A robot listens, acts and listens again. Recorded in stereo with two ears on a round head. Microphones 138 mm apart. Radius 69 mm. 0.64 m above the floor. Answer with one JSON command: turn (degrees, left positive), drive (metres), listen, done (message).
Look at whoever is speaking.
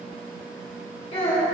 {"turn": 40}
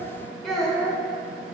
{"done": "Facing the child speaking."}